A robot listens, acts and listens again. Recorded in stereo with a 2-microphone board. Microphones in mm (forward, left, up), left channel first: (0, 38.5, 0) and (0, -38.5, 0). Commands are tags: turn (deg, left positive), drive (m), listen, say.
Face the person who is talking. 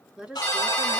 <turn deg="-30"/>
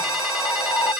<listen/>
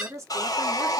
<turn deg="-130"/>
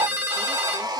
<listen/>
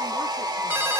<listen/>
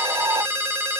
<say>I heard a woman speaking from this way, but can't make it out now.</say>